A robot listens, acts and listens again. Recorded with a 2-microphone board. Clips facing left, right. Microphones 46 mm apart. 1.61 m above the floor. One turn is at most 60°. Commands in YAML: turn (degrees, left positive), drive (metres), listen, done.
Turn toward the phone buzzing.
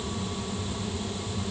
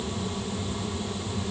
listen: true
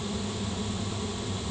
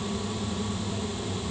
listen: true
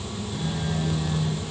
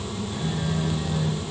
turn: -30
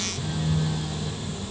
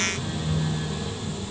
turn: -60
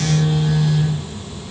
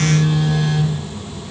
turn: -60
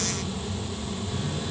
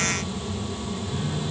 turn: -30
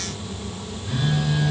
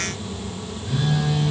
done: "Facing the phone buzzing."